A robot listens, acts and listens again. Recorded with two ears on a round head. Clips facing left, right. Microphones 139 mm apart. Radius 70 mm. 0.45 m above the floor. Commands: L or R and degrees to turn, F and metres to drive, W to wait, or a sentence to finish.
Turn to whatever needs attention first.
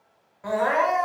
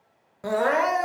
R50
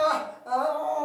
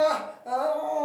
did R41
R20
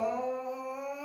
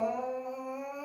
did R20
Facing the crying.